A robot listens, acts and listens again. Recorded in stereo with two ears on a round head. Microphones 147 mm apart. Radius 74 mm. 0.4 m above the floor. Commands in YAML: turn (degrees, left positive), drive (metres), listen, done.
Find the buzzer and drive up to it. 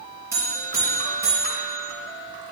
turn: -15
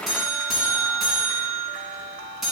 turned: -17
drive: 1.0
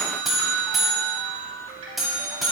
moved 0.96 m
drive: 1.0
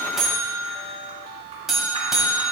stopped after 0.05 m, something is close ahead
done: "I am next to the buzzer."